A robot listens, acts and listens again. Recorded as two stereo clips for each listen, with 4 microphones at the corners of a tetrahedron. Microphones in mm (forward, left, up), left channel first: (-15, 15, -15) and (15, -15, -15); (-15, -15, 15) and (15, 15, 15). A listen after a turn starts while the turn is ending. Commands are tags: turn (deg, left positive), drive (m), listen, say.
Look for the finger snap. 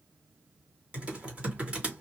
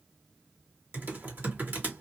<listen/>
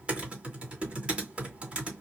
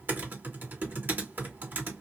<listen/>
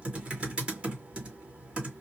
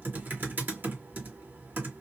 <say>I can't make out a finger snap, only typing on a keyboard.</say>